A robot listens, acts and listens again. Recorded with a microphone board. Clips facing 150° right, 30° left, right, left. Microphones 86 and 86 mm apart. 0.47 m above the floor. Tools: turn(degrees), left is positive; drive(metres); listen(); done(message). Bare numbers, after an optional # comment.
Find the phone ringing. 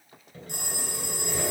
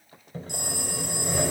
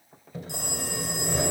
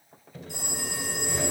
# The phone ringing: 105° right.
turn(-105)
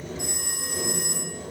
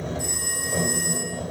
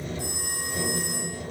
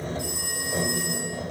# The phone ringing is now 30° right.
turn(-30)
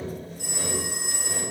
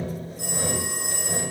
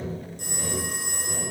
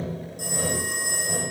# The phone ringing is now 10° left.
turn(10)
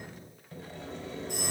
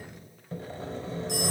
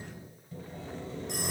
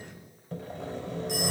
done("Facing the phone ringing, over 4 m away.")